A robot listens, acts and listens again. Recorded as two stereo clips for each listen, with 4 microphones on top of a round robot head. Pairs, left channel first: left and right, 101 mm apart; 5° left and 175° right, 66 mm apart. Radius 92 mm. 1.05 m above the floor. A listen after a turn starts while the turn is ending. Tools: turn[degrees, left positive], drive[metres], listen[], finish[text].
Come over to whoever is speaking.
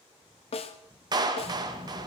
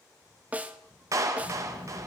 Thought: The child speaking: 60° left.
Action: turn[60]
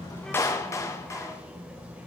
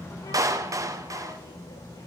Thought: The child speaking is now 15° right.
Action: turn[-15]
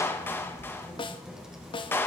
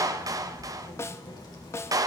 Action: drive[1.0]
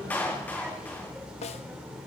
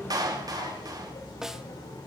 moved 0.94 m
Thought: The child speaking is now 10° right.
Action: turn[-10]
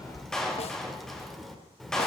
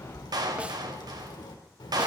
Action: drive[1.0]
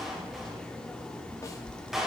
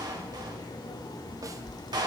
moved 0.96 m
Thought: The child speaking is now 10° left.
Action: turn[10]
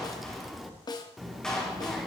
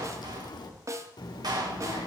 Action: drive[1.0]
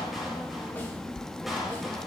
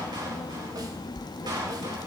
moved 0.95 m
Action: drive[1.0]
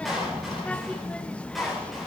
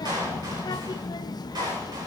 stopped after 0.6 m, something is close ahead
Thought: The child speaking is now 10° left.
Action: turn[10]
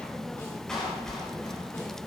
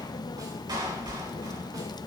Action: finish[I am next to the child speaking.]